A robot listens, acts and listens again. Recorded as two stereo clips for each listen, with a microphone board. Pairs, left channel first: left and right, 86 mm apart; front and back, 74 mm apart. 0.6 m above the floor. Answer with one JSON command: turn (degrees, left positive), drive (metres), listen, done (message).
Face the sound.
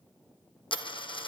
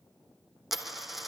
{"turn": 95}
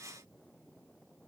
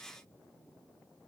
{"done": "Facing where the dropped coin came from. I can't hear it now."}